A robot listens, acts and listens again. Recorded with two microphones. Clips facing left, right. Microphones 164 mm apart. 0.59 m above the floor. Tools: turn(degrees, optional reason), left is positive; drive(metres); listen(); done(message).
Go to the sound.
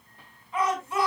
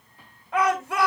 turn(degrees=-90)
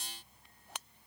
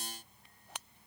listen()
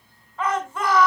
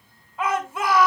drive(metres=1.0)
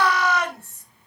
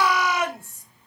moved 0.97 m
turn(degrees=-10, reason="The shout is now 10° right.")
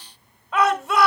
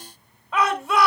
drive(metres=1.0)
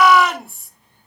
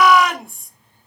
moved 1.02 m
drive(metres=1.0)
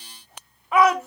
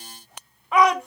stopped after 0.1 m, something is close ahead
done("I am next to the shout.")